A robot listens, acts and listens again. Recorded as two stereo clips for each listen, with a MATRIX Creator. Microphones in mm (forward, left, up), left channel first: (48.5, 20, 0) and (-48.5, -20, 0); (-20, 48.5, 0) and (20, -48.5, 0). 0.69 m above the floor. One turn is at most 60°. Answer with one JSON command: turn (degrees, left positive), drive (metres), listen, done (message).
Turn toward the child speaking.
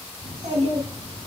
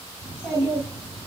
{"turn": -60}
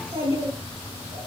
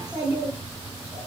{"turn": -60}
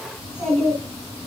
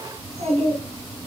{"turn": -60}
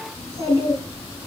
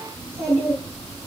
{"turn": -30}
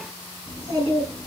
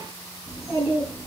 {"done": "Found it: a child speaking, straight ahead, 2 to 4 m away."}